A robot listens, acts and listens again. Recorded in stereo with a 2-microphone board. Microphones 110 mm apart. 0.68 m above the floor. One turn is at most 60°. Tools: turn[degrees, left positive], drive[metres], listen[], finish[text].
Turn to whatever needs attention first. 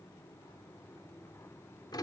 Action: listen[]
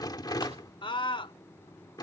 Thought: The scream: about 50° left or 130° left.
Action: turn[50]
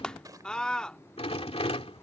Thought: So it is at 10° left.
Action: turn[10]
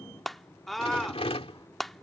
Action: finish[Found it: a scream, straight ahead.]